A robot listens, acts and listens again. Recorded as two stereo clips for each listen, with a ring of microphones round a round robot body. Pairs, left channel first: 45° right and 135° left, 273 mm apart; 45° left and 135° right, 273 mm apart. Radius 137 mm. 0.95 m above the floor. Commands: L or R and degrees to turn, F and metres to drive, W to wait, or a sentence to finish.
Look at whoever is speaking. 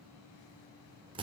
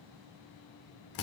W
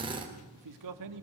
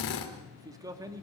L145
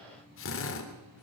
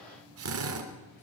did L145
W
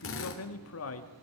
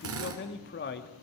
Facing the man speaking, 2 to 4 m away.